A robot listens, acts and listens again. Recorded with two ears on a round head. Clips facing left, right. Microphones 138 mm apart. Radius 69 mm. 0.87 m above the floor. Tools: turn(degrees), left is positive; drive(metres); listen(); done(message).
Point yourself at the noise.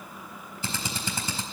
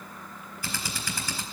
turn(degrees=20)
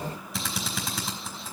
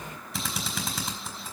done("Found it: a drill, straight ahead.")